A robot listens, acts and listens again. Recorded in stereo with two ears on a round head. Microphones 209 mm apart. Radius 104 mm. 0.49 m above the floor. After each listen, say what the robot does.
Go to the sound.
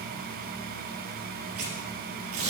Turn 70° right.
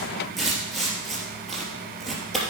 Drive 1.0 m forward.
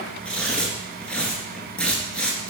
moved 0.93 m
Drive 1.0 m forward.
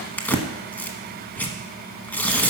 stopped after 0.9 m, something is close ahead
Turn 10° left.
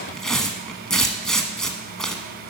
Arrived at the tearing paper, straight ahead.